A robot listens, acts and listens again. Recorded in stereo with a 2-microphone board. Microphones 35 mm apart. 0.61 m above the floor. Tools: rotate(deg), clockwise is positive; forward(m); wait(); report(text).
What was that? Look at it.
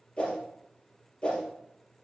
rotate(-35)
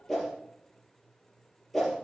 report("Found it: a whoosh, straight ahead.")